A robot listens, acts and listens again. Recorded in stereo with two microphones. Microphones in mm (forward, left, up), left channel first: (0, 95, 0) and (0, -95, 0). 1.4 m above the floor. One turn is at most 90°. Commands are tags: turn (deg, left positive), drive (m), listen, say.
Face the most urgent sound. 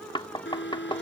<turn deg="70"/>
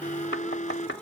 <turn deg="40"/>
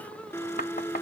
<turn deg="10"/>
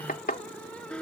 <say>Found it: an alarm, straight ahead.</say>